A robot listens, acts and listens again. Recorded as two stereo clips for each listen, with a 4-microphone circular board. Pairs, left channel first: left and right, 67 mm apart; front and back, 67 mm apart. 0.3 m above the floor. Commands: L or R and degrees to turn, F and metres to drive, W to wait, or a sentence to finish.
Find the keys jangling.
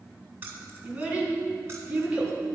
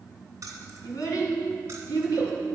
R145
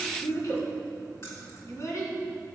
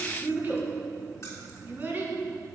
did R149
W
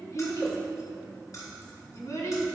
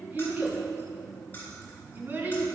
L60
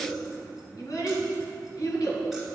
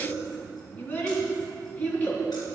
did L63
W
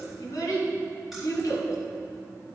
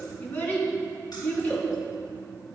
W
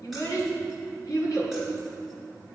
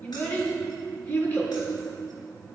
Facing where the keys jangling came from. I can't hear it now.